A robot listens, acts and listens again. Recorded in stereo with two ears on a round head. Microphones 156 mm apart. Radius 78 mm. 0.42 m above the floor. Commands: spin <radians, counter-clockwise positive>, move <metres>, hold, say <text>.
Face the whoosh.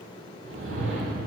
spin -1.13
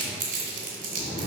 spin -0.17
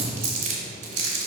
say Facing the whoosh.